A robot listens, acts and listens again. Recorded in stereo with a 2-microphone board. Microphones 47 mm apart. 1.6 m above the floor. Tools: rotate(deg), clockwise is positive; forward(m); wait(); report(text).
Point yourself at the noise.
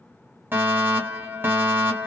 rotate(45)
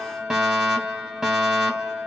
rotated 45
rotate(15)
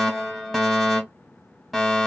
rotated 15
report("Facing the fire alarm.")